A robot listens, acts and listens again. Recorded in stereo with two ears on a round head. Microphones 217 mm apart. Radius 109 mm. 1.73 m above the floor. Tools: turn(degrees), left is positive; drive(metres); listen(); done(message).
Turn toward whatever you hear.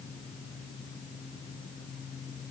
listen()
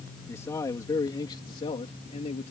turn(degrees=30)
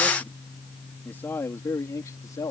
turn(degrees=15)
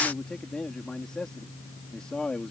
done("Facing the man speaking.")